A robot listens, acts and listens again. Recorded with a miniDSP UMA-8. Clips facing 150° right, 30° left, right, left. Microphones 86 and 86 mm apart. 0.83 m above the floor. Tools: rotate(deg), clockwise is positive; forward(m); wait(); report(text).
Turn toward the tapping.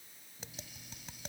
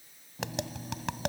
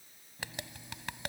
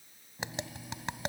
rotate(-20)
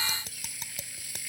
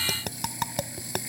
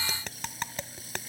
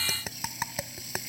report("Facing the tapping.")